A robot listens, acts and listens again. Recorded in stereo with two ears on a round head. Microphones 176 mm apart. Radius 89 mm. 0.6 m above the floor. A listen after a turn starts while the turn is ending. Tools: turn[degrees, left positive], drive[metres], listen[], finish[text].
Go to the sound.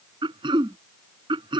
Thought: The throat clearing: about 25° right or 155° right.
Action: turn[-25]
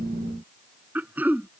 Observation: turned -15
Thought: So it is at 10° right.
Action: turn[-10]
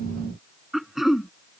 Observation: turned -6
Action: drive[1.0]
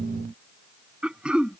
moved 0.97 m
Action: drive[1.0]
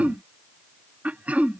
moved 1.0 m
Action: drive[1.0]
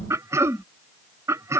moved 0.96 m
Thought: The throat clearing is now 15° right.
Action: turn[-15]
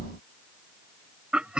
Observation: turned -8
Action: drive[1.0]
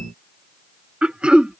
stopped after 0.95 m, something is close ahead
Action: finish[Arrived at the throat clearing, straight ahead.]